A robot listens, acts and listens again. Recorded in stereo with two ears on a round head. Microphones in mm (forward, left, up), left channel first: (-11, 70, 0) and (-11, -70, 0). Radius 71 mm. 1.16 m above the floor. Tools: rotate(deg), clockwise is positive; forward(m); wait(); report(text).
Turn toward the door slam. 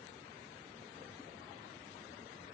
wait()
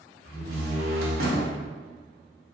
rotate(70)
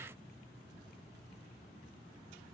wait()
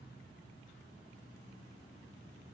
report("I heard a door slam, but can't make it out now. It was about straight ahead or 40° right.")